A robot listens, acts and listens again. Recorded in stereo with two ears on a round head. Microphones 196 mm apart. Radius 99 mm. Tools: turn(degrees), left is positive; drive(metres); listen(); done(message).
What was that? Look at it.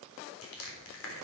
turn(degrees=70)
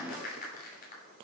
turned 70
turn(degrees=40)
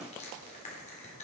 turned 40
turn(degrees=30)
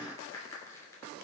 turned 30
turn(degrees=15)
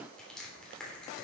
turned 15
done("Found it: crushing, straight ahead, 2 to 4 m away.")